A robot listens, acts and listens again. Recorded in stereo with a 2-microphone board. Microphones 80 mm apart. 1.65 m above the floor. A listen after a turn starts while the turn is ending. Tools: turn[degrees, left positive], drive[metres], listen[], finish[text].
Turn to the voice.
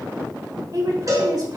Thought: The woman speaking: about 55° right or 125° right.
Action: turn[-55]
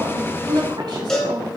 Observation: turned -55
Thought: So it is at 70° right.
Action: turn[-70]
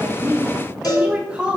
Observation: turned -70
Thought: The woman speaking is now 15° right.
Action: turn[-15]
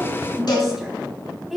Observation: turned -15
Action: finish[Facing the woman speaking, 2 to 4 m away.]